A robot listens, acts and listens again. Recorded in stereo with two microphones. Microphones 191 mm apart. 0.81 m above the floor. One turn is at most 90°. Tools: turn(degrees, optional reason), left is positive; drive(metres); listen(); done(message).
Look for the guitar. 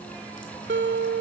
turn(degrees=-75, reason="The guitar: about 75° right or 105° right.")
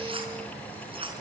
listen()
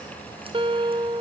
turn(degrees=-30, reason="So it is at 30° right.")
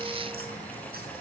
listen()
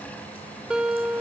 done("Found it: a guitar, straight ahead, 2 to 4 m away.")